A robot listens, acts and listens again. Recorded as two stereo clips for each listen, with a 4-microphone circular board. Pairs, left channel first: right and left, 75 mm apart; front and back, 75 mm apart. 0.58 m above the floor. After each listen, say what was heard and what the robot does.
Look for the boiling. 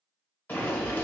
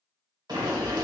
The boiling: 155° right. Turn 155° right.
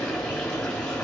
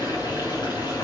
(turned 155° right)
The boiling is now 10° right. Turn 10° right.
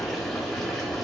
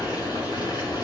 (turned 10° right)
Found it: boiling, straight ahead, 1 to 2 m away.